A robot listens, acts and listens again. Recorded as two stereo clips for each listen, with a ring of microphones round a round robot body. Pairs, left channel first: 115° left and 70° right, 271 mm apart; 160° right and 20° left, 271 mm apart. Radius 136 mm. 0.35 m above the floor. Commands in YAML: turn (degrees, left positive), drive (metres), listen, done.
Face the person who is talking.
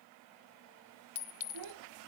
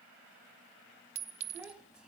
turn: -65
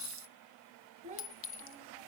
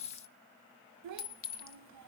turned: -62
done: "Facing the child speaking, 1 to 2 m away."